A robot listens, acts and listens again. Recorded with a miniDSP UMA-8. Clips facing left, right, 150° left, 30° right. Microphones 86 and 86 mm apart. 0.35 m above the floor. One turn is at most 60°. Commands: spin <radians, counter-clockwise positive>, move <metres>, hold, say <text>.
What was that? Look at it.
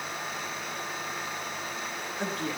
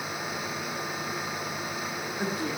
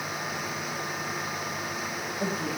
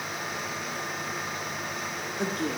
spin -0.17
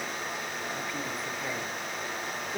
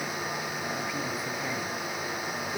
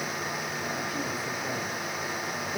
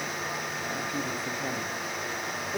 hold
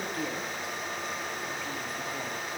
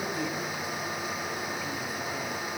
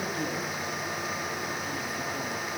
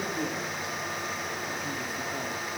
say Found it: a woman speaking, straight ahead.